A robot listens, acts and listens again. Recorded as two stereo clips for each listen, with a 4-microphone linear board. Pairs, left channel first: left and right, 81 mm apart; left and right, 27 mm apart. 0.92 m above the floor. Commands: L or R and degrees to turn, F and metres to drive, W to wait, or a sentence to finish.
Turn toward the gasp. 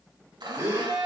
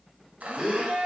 R35
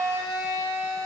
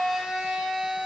W
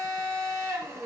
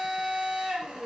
I heard a gasp, but can't make it out now. It was about straight ahead or 110° right.